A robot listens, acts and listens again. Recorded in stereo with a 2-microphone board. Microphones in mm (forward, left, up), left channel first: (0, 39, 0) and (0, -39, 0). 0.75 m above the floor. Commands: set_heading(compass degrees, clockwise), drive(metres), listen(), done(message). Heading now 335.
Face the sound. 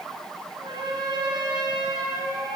set_heading(65)
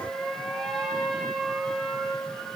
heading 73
done("Found it: a trumpet, straight ahead, over 4 m away.")